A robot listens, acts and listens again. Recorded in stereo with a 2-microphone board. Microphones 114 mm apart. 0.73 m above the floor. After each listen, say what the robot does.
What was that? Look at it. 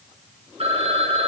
Turn 70° right.
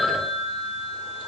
Facing the phone ringing.